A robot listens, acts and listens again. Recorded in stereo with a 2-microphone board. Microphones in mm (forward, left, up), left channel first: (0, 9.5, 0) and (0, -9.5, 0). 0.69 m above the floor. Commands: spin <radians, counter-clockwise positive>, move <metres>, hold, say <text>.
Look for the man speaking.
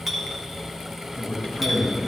spin 0.79
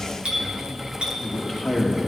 spin -0.17
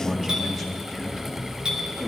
spin -0.52
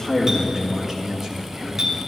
spin -0.44
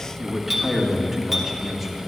say Found it: a man speaking, straight ahead, 1 to 2 m away.